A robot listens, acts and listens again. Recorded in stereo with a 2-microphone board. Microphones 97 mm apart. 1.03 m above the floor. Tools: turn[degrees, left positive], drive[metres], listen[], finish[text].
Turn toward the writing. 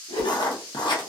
Thought: The writing: about 50° left or 130° left.
Action: turn[50]
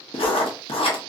Thought: So it is at 75° left.
Action: turn[75]
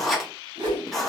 Action: finish[Facing the writing.]